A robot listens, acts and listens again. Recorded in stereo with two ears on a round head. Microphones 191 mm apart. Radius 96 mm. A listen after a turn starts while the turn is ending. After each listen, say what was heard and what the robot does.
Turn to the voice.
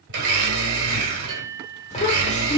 The child speaking: about 35° left or 145° left. Turn 35° left.
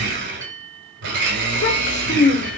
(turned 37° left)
So it is at 105° left. Turn 105° left.
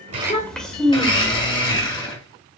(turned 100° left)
Found it: a child speaking, straight ahead.